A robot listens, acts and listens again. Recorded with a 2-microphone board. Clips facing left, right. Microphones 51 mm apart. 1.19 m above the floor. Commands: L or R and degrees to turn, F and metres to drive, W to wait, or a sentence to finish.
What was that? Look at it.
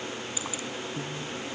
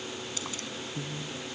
L30
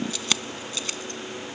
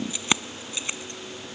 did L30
R20
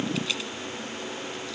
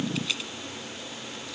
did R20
W
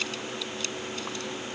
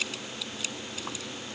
Facing the keys jangling.